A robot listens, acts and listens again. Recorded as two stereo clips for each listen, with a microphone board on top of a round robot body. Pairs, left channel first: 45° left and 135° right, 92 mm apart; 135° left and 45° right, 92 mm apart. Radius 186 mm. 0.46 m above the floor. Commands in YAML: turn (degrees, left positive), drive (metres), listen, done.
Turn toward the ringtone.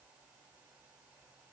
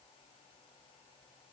listen: true
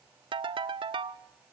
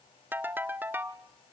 turn: -110
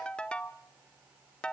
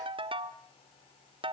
turn: -35
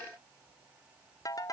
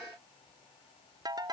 done: "Facing the ringtone, under 1 m away."